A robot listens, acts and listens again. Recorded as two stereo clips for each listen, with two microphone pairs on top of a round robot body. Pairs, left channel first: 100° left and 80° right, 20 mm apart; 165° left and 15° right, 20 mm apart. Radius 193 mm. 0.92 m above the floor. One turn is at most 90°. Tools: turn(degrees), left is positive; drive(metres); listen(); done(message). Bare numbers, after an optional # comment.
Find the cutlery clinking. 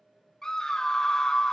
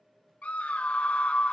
listen()
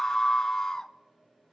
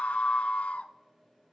listen()
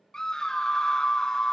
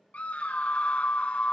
done("I can't make out cutlery clinking, only a scream.")